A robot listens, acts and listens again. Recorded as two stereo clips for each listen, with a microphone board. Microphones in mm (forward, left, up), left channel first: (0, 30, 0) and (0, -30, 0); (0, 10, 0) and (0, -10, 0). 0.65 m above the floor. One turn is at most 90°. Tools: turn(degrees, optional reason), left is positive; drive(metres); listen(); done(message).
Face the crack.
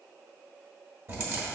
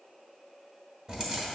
turn(degrees=-45, reason="The crack: about 45° right or 135° right.")
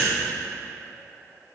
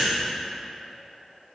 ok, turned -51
listen()
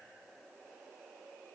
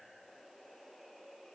done("I heard a crack, but can't make it out now. It was about 5° left or 85° right.")